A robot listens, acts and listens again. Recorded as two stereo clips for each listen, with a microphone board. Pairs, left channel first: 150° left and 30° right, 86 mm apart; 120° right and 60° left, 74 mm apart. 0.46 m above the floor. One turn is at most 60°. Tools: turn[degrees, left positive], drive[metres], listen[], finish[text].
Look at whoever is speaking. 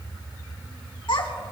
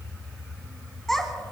Thought: The child speaking: 155° left.
Action: turn[60]
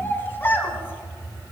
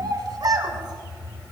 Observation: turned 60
Thought: The child speaking is now 85° left.
Action: turn[60]
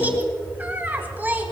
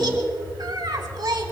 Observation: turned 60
Thought: The child speaking is now 40° left.
Action: turn[40]
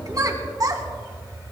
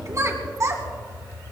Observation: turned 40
Thought: The child speaking is now 10° left.
Action: turn[10]
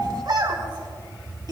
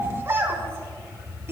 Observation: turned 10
Action: finish[Facing the child speaking, 2 to 4 m away.]